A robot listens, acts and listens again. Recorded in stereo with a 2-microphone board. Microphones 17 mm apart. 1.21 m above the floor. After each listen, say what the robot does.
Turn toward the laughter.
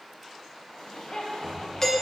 Turn 90° left.
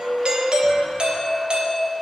Keep listening.
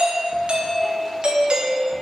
Keep listening.
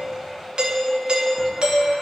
I heard laughter from this way, but can't make it out now.